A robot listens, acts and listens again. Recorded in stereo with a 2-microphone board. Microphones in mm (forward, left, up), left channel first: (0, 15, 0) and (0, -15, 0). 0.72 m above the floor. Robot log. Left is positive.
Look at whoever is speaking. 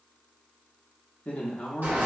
note: The man speaking: about 50° left or 130° left.
cmd yaw +50
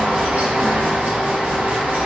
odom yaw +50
cmd idle
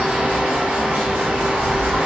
cmd idle
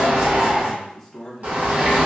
note: So it is at 10° left.
cmd yaw +10
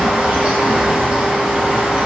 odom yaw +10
cmd idle
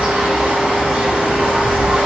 cmd idle
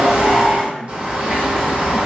end: Found it: a man speaking, straight ahead.